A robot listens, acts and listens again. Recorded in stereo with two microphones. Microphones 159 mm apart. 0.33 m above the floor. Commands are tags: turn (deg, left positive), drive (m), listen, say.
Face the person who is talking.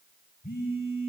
<listen/>
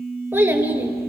<turn deg="-30"/>
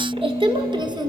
<turn deg="-155"/>
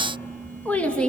<say>Found it: a child speaking, straight ahead, 2 to 4 m away.</say>